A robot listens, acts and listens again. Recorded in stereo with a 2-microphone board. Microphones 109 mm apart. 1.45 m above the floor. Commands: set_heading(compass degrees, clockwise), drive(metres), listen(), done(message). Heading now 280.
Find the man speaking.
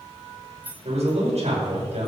set_heading(350)
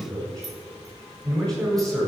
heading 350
set_heading(20)
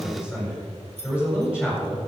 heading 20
set_heading(30)
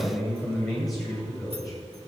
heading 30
done("Facing the man speaking.")